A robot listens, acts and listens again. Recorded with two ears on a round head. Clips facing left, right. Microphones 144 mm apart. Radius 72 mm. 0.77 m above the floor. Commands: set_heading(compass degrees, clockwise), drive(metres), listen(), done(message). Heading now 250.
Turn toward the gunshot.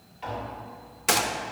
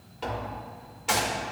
set_heading(185)
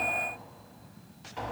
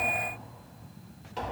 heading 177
listen()
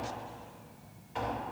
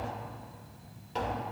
done("I heard a gunshot, but can't make it out now. It was about 10° right or 45° left.")